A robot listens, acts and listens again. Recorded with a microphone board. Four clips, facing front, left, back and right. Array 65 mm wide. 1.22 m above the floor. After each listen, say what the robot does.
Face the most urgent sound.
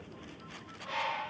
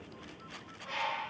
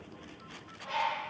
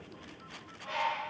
Keep listening.
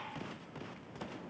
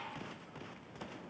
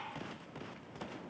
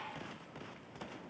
Keep listening.
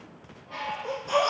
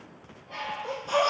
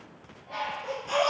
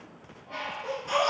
Turn 100° right.
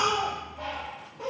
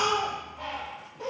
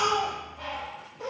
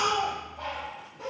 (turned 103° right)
Found it: a baby crying, straight ahead.